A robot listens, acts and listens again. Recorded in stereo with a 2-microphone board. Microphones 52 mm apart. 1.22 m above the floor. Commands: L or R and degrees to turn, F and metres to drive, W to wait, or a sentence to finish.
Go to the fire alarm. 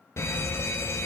L55
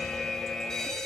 L10
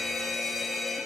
F1.0
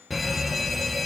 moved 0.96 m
F1.0
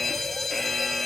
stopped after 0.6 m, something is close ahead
Arrived at the fire alarm, straight ahead.